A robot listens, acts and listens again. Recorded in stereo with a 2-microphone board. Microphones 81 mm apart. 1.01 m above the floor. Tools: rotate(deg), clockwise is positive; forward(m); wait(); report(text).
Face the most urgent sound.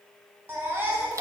rotate(25)
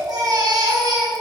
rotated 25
rotate(130)
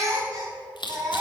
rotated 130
rotate(45)
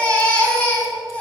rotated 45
rotate(-15)
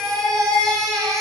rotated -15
report("Facing the baby crying, 2 to 4 m away.")